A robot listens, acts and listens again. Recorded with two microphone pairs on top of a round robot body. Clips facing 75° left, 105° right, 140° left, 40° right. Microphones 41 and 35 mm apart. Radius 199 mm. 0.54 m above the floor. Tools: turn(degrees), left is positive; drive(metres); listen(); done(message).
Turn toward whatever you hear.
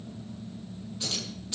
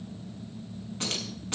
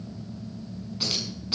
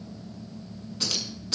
turn(degrees=-145)
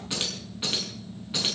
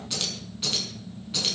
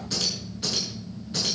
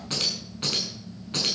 done("Found it: keys jangling, straight ahead.")